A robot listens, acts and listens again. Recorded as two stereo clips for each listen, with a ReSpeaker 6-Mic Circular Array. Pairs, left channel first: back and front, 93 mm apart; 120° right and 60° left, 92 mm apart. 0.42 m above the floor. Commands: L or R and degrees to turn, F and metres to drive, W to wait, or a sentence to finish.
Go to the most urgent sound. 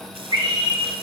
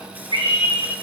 L35
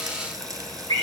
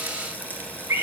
F1.0
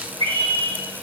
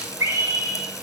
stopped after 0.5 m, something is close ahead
Blocked. The scream is further on, straight ahead.